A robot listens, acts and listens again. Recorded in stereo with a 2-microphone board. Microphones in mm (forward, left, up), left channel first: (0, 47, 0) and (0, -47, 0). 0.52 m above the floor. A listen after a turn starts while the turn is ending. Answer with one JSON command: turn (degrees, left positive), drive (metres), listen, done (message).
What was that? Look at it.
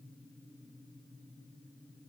{"listen": true}
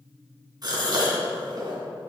{"turn": -45}
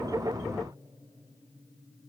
{"listen": true}
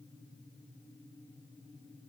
{"done": "I heard a gasp, but can't make it out now. It was about straight ahead or 90° right."}